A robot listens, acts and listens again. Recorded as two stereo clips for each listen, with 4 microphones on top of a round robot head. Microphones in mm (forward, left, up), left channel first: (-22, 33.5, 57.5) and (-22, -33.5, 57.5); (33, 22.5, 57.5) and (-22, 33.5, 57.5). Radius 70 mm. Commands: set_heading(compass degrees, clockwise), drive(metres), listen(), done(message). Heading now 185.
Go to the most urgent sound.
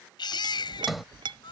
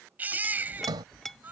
set_heading(75)
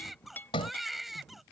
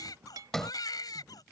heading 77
drive(1.0)
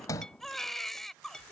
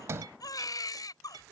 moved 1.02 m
drive(1.0)
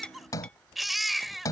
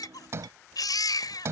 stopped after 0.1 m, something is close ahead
done("Something is in my way. I am facing the baby crying but have not reached it.")